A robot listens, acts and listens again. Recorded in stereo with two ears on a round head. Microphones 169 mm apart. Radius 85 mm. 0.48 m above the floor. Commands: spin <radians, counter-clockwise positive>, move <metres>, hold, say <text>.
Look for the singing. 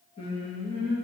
spin 0.61
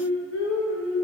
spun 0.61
spin 1.75
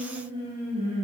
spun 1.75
spin -0.61
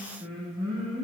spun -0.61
spin -0.52
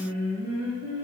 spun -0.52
spin -0.35
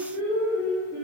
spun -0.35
spin -0.17
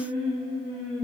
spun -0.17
say Found it: singing, straight ahead, 1 to 2 m away.